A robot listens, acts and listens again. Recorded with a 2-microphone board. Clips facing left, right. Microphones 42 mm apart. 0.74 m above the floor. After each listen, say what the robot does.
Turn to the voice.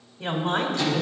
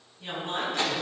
Turn 60° left.
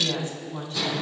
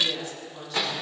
Turn 55° left.
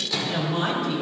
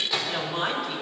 Found it: a woman speaking, straight ahead, 2 to 4 m away.